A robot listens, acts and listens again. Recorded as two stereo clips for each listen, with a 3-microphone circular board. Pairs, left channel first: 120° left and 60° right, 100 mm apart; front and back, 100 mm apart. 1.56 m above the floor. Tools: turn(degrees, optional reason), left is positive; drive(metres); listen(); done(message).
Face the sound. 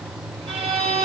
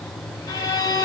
turn(degrees=-55, reason="The violin: 55° right.")
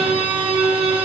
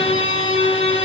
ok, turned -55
turn(degrees=-30, reason="The violin is now 30° right.")
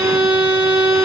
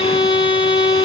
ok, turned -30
done("Facing the violin.")